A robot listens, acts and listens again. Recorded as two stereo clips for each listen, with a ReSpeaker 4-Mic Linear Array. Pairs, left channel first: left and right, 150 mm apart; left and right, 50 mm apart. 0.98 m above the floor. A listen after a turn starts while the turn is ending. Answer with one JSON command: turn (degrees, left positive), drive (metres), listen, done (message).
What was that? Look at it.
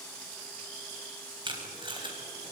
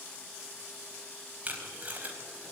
{"turn": -30}
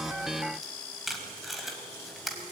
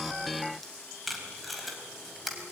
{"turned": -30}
{"done": "Found it: tape being pulled, straight ahead, over 4 m away."}